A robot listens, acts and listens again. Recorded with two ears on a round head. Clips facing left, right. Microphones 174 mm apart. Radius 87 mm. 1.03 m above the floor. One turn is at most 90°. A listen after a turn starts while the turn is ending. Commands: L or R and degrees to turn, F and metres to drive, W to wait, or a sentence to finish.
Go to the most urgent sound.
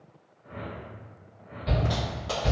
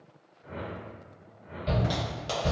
R30
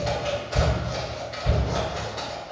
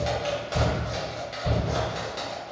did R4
R30
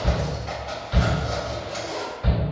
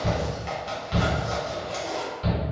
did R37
R90
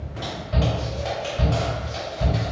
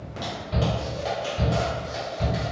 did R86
R45
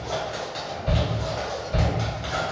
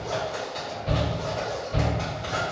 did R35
R10
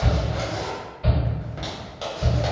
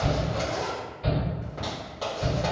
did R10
F1.0
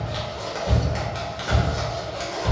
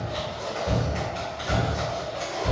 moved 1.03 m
F1.0
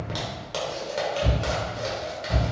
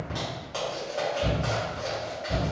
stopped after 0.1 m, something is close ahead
I am next to the shout.